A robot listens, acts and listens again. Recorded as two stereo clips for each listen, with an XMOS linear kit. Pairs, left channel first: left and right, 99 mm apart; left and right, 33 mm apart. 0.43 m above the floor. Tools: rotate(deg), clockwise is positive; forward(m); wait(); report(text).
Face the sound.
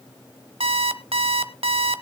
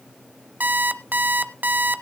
rotate(90)
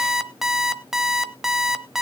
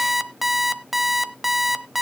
report("Facing the alarm clock.")